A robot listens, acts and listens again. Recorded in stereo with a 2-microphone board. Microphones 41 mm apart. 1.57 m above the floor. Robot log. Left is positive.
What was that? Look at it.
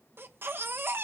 note: The baby crying: about 60° right or 120° right.
cmd yaw -60
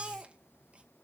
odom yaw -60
note: So it is at 30° right.
cmd yaw -30
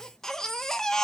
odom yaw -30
note: The baby crying is now 15° left.
cmd yaw +15
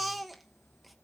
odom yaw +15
end: Found it: a baby crying, straight ahead, 1 to 2 m away.